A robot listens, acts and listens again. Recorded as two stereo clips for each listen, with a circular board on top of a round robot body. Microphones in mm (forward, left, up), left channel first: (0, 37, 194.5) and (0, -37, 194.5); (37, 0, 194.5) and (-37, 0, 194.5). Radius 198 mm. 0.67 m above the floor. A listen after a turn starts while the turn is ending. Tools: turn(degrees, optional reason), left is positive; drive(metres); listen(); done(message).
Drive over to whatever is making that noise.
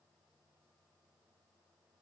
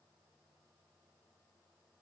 listen()
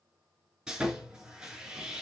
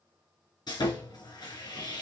turn(degrees=-10, reason="The sawing: 10° right.")
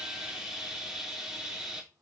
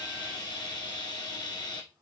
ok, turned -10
drive(metres=1.0)
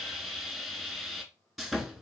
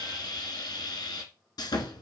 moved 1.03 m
drive(metres=1.0)
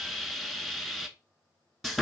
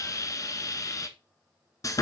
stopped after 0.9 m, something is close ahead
done("I am next to the sawing.")